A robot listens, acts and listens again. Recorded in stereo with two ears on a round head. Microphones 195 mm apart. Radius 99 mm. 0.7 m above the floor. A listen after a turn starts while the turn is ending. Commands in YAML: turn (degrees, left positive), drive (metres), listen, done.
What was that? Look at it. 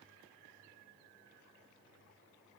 listen: true
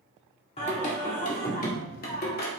turn: 45
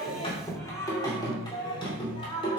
turn: 25
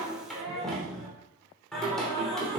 done: "Facing the singing."